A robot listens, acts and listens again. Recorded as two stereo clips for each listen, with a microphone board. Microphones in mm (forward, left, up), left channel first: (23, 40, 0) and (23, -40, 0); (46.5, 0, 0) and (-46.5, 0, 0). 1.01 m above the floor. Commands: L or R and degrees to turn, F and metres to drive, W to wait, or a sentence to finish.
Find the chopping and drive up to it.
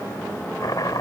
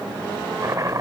L125
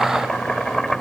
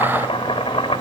F1.0
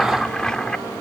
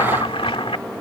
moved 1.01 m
L10
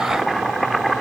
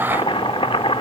F1.0
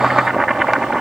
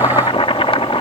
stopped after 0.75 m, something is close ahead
I am next to the chopping.